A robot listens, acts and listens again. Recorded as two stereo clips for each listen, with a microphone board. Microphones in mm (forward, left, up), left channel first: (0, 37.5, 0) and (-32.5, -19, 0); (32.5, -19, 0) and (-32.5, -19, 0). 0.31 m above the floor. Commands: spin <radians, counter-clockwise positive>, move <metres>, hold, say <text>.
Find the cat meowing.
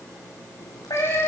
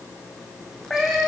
spin 1.48
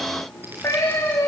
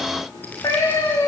spin 0.35
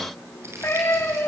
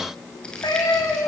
spin 0.17
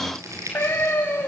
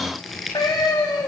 say Facing the cat meowing, over 4 m away.